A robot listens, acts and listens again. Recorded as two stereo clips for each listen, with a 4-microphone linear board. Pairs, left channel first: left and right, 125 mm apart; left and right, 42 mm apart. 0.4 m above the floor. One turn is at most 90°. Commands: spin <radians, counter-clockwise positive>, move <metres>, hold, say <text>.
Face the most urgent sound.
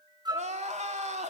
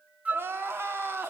spin -1.22
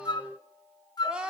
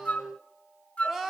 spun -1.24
spin -0.17
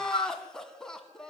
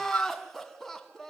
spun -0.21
say Facing the crying.